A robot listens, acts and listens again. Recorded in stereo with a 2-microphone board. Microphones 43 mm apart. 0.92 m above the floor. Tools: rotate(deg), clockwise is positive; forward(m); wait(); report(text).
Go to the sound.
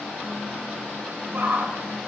rotate(50)
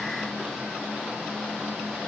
wait()
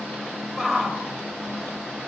forward(1.0)
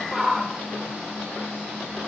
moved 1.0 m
forward(1.0)
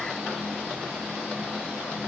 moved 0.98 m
wait()
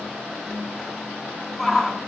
forward(1.0)
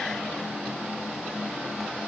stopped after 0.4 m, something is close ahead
wait()
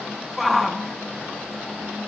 report("Arrived at the shout, straight ahead.")